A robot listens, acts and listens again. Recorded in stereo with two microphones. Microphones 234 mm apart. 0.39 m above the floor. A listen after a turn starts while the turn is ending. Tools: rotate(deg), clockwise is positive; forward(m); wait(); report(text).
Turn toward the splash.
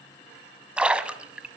rotate(30)
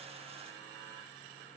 wait()
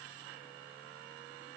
report("I heard a splash, but can't make it out now. It was about 25° left or 145° right.")